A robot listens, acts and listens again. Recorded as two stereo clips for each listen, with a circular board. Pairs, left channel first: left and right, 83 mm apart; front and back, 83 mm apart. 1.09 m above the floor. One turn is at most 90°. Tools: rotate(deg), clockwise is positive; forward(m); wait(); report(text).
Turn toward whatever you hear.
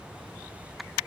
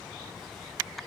wait()
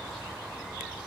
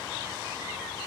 wait()
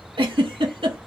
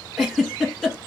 rotate(90)
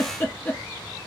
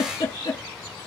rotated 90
rotate(-15)
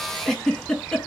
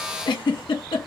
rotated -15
report("Facing the giggle, 2 to 4 m away.")